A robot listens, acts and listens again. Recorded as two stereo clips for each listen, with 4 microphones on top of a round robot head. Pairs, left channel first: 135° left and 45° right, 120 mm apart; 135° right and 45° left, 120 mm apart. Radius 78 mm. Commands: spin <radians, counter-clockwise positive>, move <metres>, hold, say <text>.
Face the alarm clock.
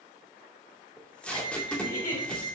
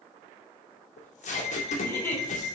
spin -3.05
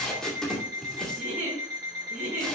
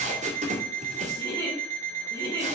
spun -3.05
spin 0.35
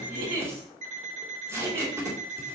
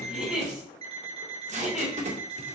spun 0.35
say Found it: an alarm clock, straight ahead, 2 to 4 m away.